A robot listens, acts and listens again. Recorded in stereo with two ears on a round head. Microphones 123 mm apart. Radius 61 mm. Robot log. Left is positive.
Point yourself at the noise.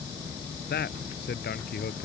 cmd yaw +90
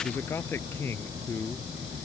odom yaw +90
note: So it is at 15° left.
cmd yaw +15
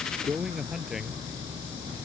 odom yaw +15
end: Facing the man speaking.